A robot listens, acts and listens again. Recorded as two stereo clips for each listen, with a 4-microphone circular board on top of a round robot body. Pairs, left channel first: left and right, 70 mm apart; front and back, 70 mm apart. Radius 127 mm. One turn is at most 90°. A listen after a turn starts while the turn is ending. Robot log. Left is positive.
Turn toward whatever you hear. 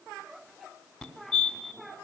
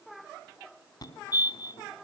note: The fire alarm: 10° left.
cmd yaw +10
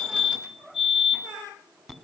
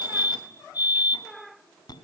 end: Found it: a fire alarm, straight ahead, 2 to 4 m away.